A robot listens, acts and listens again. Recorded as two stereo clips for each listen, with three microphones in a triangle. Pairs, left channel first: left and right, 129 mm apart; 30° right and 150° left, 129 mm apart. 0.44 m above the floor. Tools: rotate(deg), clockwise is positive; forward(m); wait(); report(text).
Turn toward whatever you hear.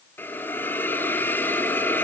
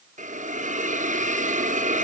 rotate(-165)
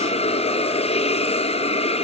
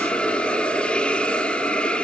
rotate(-50)
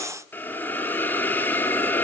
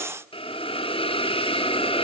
rotate(-15)
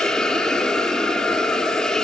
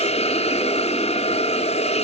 report("Found it: a hiss, straight ahead, 2 to 4 m away.")